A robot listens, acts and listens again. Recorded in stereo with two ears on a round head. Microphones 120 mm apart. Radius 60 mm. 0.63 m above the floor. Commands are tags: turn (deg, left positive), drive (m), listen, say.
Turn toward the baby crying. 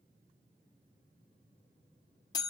<listen/>
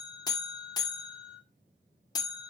<listen/>
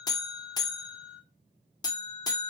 <say>I can't make out a baby crying, only a buzzer.</say>